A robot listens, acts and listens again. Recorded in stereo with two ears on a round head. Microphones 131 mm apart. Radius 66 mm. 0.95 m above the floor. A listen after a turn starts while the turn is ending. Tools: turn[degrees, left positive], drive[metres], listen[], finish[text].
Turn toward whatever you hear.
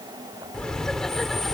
Action: turn[30]
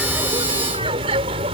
Thought: So it is at 40° right.
Action: turn[-40]
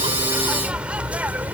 Thought: The laughter is now 10° right.
Action: turn[-10]
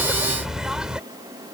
Action: finish[Found it: laughter, straight ahead.]